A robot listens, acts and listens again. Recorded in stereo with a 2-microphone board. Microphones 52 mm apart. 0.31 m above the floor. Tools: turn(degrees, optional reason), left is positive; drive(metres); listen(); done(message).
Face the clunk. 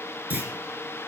turn(degrees=-35, reason="The clunk: about 35° right or 145° right.")
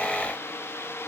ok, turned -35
listen()
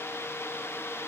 done("I heard a clunk, but can't make it out now. It was about straight ahead or 110° right.")